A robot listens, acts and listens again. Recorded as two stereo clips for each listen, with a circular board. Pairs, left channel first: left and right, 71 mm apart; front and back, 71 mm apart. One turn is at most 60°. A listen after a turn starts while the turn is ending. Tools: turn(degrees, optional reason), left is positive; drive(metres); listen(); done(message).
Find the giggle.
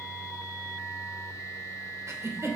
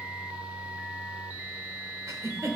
turn(degrees=-60, reason="The giggle: 140° right.")
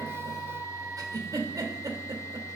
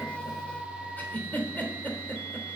turn(degrees=-60, reason="The giggle is now 65° right.")
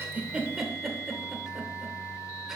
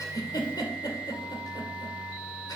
turn(degrees=-10, reason="The giggle is now 10° right.")
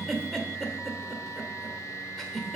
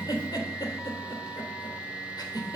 done("Found it: a giggle, straight ahead, 2 to 4 m away.")